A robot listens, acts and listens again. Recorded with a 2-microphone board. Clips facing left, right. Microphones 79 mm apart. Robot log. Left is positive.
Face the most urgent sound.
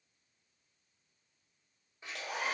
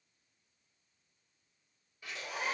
cmd idle
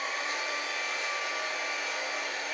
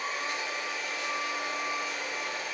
cmd idle
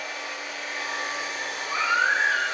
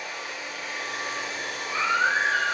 note: The baby crying: about 65° left or 115° left.
cmd yaw +65
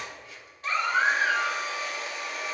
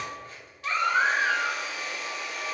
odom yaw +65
end: Found it: a baby crying, straight ahead.